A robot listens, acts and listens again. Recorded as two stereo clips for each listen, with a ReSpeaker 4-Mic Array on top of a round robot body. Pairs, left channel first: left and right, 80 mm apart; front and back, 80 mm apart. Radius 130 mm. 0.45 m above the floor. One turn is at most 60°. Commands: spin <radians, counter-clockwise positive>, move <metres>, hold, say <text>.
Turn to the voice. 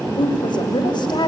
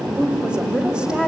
spin 1.05
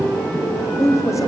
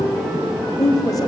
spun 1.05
spin 0.70
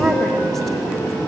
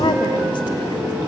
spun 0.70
hold
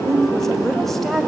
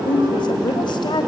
say Found it: a woman speaking, straight ahead, 2 to 4 m away.